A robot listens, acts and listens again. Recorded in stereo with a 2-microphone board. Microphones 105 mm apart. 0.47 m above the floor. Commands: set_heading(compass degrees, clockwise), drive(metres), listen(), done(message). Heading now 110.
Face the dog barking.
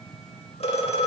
listen()
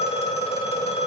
listen()
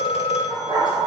set_heading(155)
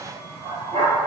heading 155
set_heading(255)
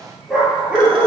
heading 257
set_heading(267)
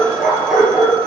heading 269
done("Found it: a dog barking, straight ahead.")